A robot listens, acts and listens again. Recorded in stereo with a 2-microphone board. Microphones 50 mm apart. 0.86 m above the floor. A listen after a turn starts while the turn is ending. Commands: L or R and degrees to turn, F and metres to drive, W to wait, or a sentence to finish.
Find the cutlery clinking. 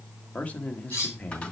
L70
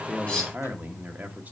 W
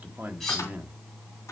Found it: cutlery clinking, straight ahead.